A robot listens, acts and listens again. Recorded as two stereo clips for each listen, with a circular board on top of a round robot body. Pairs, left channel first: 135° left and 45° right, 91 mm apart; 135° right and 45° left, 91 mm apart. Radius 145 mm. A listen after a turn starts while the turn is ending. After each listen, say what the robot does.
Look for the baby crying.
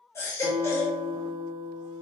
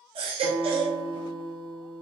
Turn 75° left.
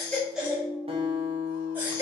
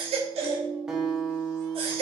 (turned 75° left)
Turn 25° left.
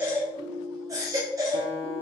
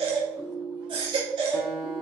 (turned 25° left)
Turn 10° left.
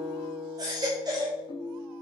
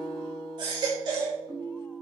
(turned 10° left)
Found it: a baby crying, straight ahead.